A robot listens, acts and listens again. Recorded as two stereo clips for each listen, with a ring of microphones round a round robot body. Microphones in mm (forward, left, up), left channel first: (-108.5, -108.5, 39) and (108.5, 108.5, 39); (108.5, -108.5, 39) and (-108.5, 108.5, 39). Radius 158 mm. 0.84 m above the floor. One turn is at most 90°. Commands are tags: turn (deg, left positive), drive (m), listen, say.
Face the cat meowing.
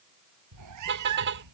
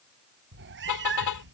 <turn deg="80"/>
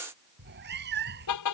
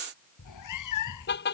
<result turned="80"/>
<turn deg="-15"/>
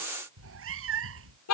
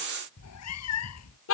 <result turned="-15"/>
<say>Found it: a cat meowing, straight ahead.</say>